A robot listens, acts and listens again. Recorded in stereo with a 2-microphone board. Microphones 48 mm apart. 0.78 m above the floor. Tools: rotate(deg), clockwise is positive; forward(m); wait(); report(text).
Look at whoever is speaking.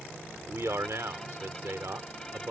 rotate(70)
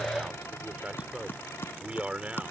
rotate(30)
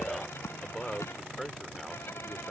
report("Found it: a man speaking, straight ahead.")